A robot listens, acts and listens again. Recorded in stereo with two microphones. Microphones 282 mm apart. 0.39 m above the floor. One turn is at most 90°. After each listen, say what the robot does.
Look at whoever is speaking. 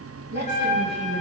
Turn 40° right.
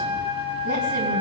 Keep listening.
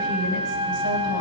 Keep listening.
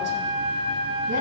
I heard a woman speaking, but can't make it out now. It was about straight ahead or 100° right.